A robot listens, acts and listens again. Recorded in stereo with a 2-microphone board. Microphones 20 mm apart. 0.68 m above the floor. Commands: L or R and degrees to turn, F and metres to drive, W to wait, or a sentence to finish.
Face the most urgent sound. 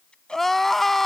L30
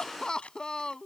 L135
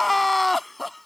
Facing the crying.